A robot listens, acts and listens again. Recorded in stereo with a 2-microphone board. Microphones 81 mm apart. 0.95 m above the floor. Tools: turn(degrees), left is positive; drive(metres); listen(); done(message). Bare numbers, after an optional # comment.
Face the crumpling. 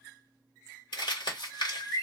# The crumpling: about 75° left or 105° left.
turn(75)
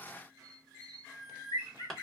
done("Found it: crumpling, straight ahead, 1 to 2 m away.")